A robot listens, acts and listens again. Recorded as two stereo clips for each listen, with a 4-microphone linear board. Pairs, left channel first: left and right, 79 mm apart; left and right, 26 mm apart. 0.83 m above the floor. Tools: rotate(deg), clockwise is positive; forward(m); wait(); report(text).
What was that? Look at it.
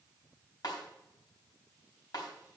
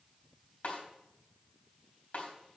rotate(-65)
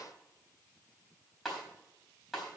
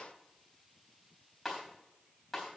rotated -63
report("Facing the snare drum, 2 to 4 m away.")